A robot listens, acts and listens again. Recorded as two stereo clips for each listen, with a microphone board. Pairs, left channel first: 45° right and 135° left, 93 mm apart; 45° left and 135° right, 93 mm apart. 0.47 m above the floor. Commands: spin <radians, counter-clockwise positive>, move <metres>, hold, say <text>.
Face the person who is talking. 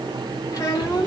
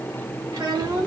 spin -1.66
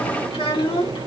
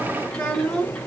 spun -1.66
spin -0.52
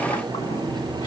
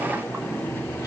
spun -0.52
hold
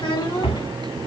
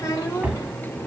spin -0.17
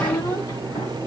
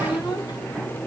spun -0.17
say Found it: a child speaking, straight ahead, 2 to 4 m away.